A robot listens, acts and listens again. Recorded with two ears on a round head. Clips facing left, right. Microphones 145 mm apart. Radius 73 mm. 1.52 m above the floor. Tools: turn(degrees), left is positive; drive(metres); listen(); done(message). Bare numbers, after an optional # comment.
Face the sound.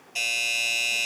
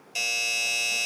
# The doorbell: about 60° right or 120° right.
turn(-60)
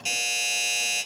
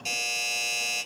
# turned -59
done("Found it: a doorbell, straight ahead.")